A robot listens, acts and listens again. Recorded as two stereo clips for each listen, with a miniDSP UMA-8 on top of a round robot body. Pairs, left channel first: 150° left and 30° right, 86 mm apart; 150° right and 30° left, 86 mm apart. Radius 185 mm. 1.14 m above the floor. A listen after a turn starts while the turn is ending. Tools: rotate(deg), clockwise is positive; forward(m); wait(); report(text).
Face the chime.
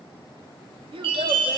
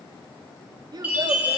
rotate(40)
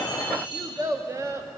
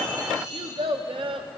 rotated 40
report("Facing the chime, 2 to 4 m away.")